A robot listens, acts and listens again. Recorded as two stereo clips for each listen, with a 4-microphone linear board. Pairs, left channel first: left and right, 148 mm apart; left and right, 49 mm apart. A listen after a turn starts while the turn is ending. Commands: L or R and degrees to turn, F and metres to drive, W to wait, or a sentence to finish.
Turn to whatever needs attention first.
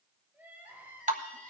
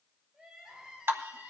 R30
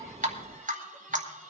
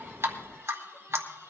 W
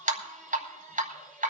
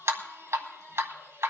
L20
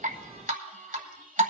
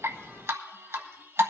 W
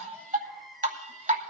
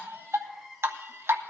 Found it: crying, straight ahead.